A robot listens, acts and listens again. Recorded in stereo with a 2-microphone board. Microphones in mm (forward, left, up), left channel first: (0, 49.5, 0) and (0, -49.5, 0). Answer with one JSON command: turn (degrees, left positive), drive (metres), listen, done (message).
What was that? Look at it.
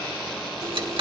{"turn": -65}
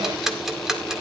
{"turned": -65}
{"done": "Facing the ticking."}